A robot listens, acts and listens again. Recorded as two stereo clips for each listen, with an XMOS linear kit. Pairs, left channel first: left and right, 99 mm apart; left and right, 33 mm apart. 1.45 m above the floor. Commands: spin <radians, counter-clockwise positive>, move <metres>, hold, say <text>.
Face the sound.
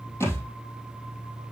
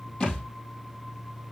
spin 0.44
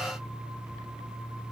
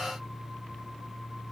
hold
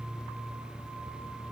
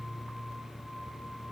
say I heard a thud, but can't make it out now. It was about straight ahead or 130° left.